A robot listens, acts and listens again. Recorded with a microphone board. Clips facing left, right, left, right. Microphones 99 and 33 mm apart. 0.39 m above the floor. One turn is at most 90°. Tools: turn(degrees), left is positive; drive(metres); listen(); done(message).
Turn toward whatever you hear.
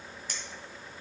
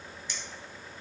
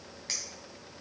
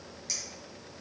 turn(degrees=45)
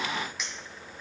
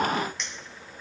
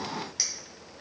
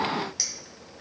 done("Found it: a clink, straight ahead.")